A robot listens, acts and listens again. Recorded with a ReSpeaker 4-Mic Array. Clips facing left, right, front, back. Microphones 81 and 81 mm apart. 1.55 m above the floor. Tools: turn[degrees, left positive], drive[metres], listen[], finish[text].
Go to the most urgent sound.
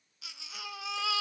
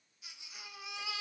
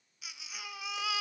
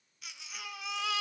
Thought: The baby crying: 85° left.
Action: turn[85]
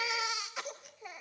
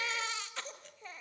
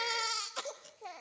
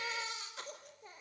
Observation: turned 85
Thought: The baby crying is now 10° left.
Action: turn[10]
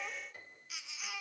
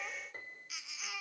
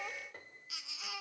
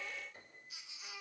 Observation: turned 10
Action: drive[1.0]
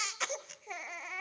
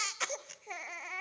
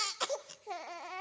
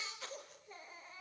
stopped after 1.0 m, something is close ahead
Action: finish[Arrived at the baby crying, straight ahead.]